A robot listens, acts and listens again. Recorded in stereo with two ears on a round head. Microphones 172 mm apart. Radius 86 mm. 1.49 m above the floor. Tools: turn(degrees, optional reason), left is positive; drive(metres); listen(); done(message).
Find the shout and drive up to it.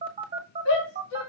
turn(degrees=90)
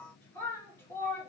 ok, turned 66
turn(degrees=10, reason="So it is at 10° left.")
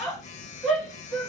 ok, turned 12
drive(metres=1.0)
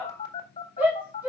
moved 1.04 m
turn(degrees=-10, reason="The shout is now 10° right.")
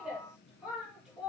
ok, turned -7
drive(metres=1.0)
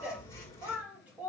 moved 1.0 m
turn(degrees=-10, reason="The shout is now 10° right.")
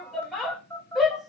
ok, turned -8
drive(metres=1.0)
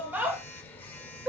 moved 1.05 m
turn(degrees=-10, reason="The shout is now 10° right.")
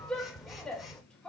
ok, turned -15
drive(metres=1.0)
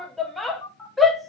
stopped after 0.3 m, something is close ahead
done("I am next to the shout.")